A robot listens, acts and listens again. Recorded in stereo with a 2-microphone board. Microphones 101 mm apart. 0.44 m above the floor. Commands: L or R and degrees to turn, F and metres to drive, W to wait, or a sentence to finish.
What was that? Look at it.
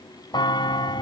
L45
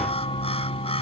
L85
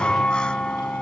L10
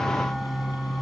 Facing the bell.